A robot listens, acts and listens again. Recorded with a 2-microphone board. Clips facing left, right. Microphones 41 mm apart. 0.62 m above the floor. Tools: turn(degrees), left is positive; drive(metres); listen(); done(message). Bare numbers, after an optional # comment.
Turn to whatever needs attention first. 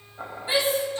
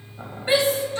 # The shout: about 65° right or 115° right.
turn(-65)
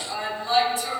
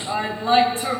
# So it is at 45° right.
turn(-45)
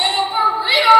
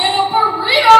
done("Facing the shout.")